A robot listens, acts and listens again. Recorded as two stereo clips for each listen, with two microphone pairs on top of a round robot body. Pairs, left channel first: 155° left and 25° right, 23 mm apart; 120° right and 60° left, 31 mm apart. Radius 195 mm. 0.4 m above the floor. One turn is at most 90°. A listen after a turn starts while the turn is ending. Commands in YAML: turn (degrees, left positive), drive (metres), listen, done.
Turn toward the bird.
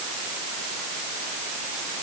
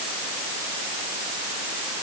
listen: true
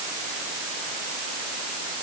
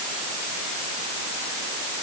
listen: true
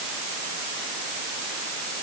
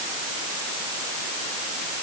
done: "I can't make out a bird."